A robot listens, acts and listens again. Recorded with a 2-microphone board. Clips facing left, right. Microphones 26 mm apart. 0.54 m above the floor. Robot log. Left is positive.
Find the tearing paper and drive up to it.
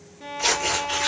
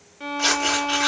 note: The tearing paper: about 65° right or 115° right.
cmd yaw -65
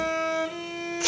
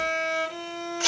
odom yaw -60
note: So it is at 45° right.
cmd yaw -45
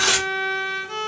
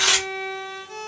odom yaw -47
cmd fwd 1.0
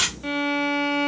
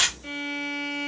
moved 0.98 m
note: The tearing paper is now 10° left.
cmd yaw +10
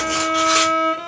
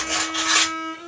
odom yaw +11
cmd idle
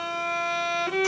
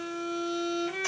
cmd idle
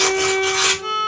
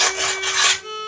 cmd fwd 1.0
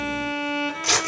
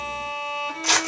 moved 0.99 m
cmd fwd 1.0
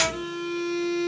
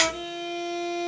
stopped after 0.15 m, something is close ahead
cmd idle
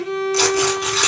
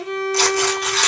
end: Arrived at the tearing paper, straight ahead.